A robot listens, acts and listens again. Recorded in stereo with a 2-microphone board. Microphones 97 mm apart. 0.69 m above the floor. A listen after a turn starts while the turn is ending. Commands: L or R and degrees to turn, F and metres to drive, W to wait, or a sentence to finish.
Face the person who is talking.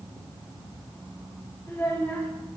L25
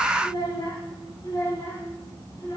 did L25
L135
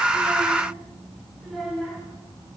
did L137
Found it: a child speaking, straight ahead, over 4 m away.